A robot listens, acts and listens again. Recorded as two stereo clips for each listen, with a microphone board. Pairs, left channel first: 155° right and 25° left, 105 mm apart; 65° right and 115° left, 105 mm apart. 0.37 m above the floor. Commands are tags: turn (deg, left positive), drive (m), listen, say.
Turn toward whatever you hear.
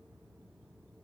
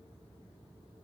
<listen/>
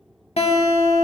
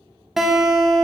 <turn deg="-160"/>
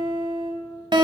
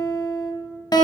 <turn deg="-20"/>
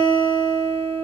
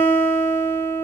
<say>Found it: a guitar, straight ahead.</say>